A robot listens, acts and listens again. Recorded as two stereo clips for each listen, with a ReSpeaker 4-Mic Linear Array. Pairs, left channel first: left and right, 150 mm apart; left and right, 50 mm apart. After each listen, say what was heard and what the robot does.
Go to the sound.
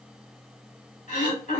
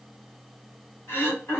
The throat clearing: about 55° left or 125° left. Turn 55° left.
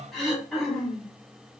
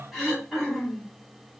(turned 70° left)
Drive 1.0 m forward.
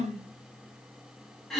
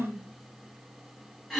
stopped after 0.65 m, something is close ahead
Arrived at the throat clearing, straight ahead.